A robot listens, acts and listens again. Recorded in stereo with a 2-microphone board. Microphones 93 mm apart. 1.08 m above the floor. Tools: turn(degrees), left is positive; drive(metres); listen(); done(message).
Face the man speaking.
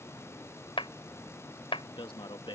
turn(degrees=55)
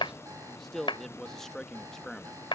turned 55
done("Found it: a man speaking, straight ahead.")